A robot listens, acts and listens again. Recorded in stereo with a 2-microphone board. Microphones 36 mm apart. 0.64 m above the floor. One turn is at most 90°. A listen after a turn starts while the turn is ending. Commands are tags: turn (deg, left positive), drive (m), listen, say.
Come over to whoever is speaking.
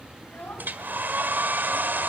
<turn deg="90"/>
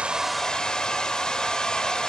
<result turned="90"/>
<listen/>
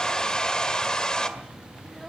<listen/>
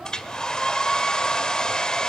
<say>I heard a child speaking from this way, but can't make it out now. I did not reach it.</say>